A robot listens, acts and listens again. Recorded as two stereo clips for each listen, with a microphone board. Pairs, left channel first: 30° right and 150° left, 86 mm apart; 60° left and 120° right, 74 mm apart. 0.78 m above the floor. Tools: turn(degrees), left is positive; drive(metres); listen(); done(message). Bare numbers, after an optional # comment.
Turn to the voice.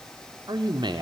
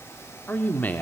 # The man speaking: 125° left.
turn(125)
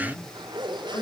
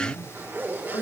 # The man speaking is now 25° left.
turn(25)
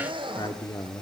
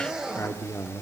# The man speaking is now 10° left.
turn(10)
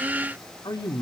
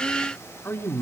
done("Facing the man speaking.")